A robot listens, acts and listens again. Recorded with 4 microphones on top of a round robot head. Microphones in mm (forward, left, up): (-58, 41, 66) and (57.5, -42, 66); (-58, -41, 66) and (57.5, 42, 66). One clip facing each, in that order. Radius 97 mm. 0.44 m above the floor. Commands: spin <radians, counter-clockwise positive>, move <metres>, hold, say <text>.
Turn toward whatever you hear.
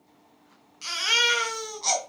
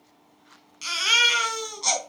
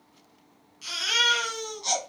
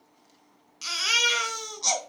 spin 0.52
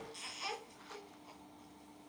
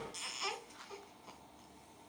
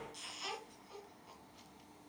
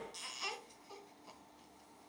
spin 0.26
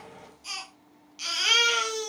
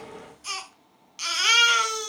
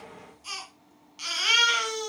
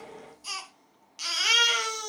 say Facing the baby crying.